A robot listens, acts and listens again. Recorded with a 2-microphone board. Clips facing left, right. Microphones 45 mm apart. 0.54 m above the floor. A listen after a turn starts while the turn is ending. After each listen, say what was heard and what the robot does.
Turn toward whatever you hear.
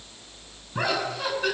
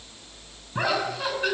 Turn 30° right.
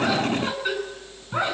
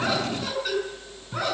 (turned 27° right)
So it is at 20° left. Turn 20° left.
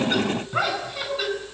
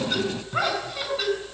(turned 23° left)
Found it: laughter, straight ahead, over 4 m away.